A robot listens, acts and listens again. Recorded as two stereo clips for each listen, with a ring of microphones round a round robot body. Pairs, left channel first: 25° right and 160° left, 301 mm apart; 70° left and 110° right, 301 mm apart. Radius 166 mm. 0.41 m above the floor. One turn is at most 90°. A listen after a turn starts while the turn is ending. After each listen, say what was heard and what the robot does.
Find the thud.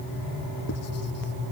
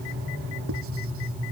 Keep listening.
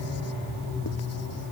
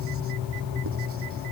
Keep listening.
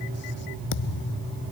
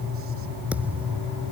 The thud: 25° right. Turn 25° right.
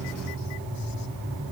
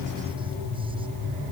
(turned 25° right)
Facing where the thud came from. I can't hear it now.